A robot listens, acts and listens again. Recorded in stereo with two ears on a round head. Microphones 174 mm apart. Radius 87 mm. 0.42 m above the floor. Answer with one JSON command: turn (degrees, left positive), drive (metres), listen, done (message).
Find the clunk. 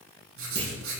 {"turn": -35}
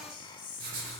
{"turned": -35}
{"listen": true}
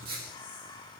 {"done": "I heard a clunk, but can't make it out now. It was about straight ahead or 110° right."}